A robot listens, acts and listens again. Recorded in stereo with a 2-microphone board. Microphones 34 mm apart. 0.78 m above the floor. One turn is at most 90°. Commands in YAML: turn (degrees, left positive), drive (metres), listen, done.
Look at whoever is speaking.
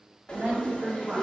turn: -60
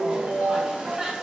listen: true
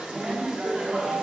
turn: -40
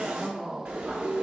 turn: -30
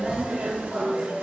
listen: true
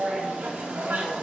listen: true
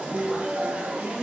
turn: -15
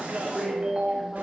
listen: true
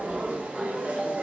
listen: true
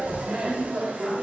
done: "I heard a woman speaking from this way, but can't make it out now."